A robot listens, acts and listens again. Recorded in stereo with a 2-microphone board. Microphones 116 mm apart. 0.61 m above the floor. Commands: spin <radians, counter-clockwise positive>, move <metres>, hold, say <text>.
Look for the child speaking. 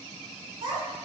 spin -0.70
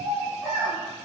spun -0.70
spin -0.17
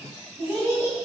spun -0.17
spin -0.17
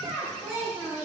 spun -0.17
say Facing the child speaking.